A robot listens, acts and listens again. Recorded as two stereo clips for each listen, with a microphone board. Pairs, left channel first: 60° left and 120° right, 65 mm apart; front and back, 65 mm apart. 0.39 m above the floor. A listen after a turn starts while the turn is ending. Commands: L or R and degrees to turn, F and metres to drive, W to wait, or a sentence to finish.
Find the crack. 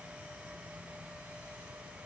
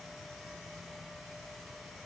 W
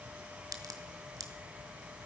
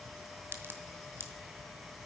R130
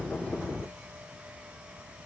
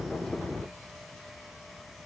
Facing where the crack came from. I can't hear it now.